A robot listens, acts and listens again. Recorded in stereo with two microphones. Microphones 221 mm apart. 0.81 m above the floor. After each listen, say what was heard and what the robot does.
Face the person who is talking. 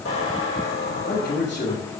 The man speaking: about 60° left or 120° left. Turn 60° left.
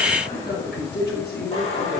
So it is at 50° left. Turn 50° left.
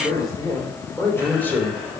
Facing the man speaking.